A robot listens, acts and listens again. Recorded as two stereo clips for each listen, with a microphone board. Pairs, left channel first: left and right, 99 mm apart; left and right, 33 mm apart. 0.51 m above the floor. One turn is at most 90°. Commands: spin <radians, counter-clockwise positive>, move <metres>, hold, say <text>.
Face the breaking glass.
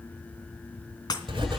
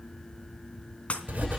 spin 0.70
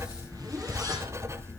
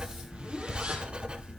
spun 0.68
hold
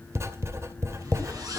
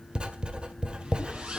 say I heard breaking glass, but can't make it out now. It was about 5° left or 100° left.